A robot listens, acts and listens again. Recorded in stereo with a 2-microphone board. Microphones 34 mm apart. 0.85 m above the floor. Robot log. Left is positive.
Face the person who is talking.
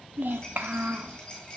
note: The child speaking: about 70° right or 110° right.
cmd yaw -70
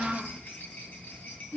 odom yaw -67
note: So it is at 15° right.
cmd yaw -15
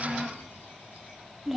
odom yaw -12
end: Facing the child speaking, under 1 m away.